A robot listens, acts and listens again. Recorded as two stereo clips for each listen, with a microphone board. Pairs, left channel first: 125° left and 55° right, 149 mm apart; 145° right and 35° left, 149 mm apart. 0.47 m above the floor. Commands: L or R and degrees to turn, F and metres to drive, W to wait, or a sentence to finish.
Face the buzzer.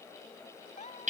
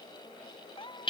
W
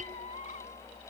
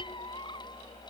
W
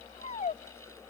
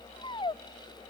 I can't make out a buzzer to turn to.